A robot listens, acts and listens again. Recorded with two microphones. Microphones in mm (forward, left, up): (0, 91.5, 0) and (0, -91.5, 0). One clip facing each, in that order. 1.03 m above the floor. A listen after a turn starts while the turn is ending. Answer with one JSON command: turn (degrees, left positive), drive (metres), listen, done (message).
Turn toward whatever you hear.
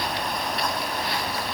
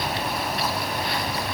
{"listen": true}
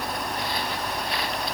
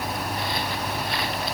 {"listen": true}
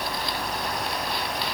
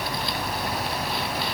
{"done": "I can't make out anything to turn to."}